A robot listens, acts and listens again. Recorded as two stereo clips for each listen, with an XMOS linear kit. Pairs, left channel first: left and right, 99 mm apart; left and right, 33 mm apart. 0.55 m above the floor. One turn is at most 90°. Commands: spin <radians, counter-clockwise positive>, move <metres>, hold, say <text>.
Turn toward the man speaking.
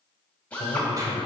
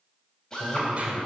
spin 1.22
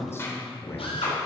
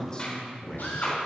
spin 0.44
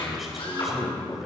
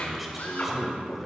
say Facing the man speaking.